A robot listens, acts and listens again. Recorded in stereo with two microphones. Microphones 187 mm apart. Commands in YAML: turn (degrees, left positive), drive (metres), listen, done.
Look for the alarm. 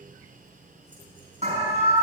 turn: -35
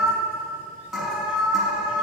done: "Facing the alarm."